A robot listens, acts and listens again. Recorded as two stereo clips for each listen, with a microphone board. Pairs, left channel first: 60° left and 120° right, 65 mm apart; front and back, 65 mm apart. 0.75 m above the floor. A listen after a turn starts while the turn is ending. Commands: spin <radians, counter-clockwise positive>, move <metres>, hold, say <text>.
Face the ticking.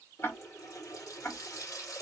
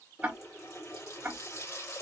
spin 1.92
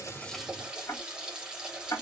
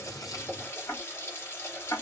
spin 0.52
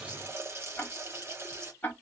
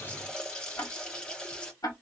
say Found it: ticking, straight ahead.